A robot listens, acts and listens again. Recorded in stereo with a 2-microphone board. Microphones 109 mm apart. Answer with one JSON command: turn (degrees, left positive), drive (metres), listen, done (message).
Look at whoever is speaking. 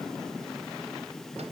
{"listen": true}
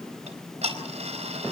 {"listen": true}
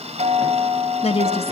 {"turn": 60}
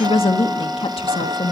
{"turn": 55}
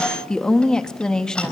{"turn": 10}
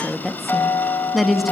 {"done": "Found it: a woman speaking, straight ahead, 1 to 2 m away."}